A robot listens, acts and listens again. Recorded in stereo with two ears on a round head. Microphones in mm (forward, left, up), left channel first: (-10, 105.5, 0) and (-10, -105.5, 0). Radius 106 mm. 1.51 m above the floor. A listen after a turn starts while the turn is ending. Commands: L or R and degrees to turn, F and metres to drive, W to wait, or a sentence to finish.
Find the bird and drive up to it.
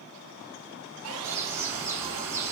R30
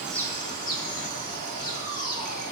L20
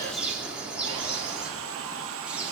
F1.0
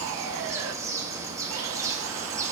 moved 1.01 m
R15
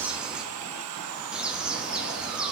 F1.0
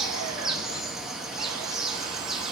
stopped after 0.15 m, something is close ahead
I am next to the bird.